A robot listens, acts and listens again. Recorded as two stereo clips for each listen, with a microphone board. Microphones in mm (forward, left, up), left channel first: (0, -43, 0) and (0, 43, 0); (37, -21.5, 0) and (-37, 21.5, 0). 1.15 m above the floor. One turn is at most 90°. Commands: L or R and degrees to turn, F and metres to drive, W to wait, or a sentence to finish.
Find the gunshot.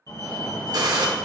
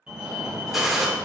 L60
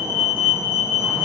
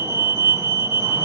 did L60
I heard a gunshot from this way, but can't make it out now.